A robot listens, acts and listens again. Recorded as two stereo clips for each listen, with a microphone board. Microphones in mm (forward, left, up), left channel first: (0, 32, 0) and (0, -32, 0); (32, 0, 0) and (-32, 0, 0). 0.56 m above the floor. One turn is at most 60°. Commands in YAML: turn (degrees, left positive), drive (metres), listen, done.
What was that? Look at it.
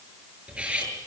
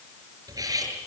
turn: -60
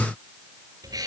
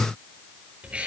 turn: -60
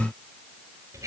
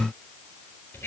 turn: -50
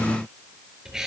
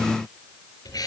done: "Found it: cutlery clinking, straight ahead."